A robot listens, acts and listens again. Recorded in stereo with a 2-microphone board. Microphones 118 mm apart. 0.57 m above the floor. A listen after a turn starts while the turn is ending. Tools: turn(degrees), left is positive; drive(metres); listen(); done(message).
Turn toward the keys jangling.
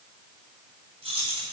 turn(degrees=-55)
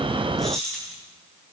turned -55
done("Facing the keys jangling.")